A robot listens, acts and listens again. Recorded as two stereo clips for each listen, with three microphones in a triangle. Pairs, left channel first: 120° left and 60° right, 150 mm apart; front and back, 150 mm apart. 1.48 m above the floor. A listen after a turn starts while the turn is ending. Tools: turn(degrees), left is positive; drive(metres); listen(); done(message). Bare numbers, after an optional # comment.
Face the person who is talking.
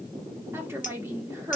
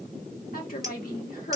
# The woman speaking: 15° left.
turn(15)
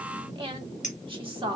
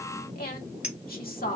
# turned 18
done("Facing the woman speaking, 1 to 2 m away.")